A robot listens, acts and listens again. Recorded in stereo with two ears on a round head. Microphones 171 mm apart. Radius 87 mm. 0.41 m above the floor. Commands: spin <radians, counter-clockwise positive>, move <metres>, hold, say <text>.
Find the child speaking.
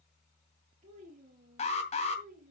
spin -0.79
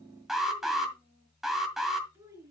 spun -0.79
spin -0.26
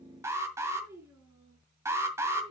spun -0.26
spin -0.35
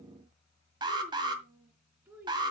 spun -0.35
spin -0.17
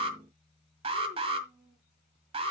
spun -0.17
hold
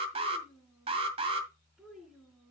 say Facing the child speaking.